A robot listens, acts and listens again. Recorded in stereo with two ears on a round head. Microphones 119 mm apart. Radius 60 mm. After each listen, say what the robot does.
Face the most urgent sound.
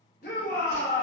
Turn 65° left.
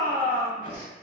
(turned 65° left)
Turn 15° left.
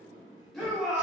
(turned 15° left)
Found it: a shout, straight ahead, under 1 m away.